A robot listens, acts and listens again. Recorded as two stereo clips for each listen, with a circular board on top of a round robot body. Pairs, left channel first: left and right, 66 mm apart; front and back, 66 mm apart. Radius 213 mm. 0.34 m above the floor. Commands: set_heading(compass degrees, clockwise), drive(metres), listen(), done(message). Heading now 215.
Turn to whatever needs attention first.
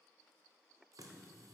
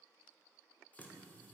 listen()
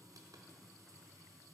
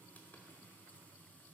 listen()
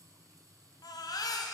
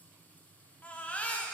set_heading(145)
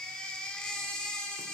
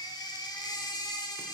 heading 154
set_heading(144)
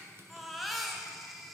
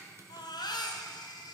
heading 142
done("Found it: a baby crying, straight ahead, 1 to 2 m away.")